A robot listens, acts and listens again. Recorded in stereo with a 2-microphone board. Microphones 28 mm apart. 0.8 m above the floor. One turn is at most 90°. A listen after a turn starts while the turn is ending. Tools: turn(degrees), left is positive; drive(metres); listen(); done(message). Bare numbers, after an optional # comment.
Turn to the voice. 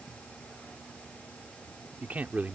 # The man speaking: about 65° right or 115° right.
turn(-65)
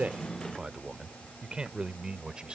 # So it is at 35° right.
turn(-35)
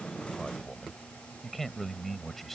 done("Found it: a man speaking, straight ahead.")